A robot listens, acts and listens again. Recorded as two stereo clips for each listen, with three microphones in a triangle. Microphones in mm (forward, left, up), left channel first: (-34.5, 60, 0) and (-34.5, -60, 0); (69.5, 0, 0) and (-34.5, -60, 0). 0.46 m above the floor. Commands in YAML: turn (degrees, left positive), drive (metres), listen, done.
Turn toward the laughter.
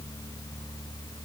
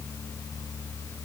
listen: true
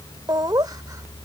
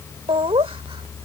turn: -135
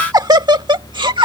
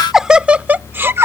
turn: -95
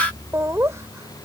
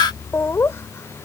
turn: -30
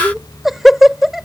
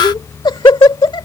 done: "Facing the laughter."